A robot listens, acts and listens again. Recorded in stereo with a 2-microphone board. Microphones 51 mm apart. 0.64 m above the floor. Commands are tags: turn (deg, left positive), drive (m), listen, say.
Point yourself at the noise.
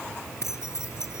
<turn deg="70"/>
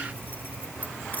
<listen/>
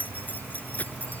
<turn deg="35"/>
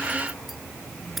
<listen/>
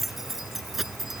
<say>Facing the keys jangling.</say>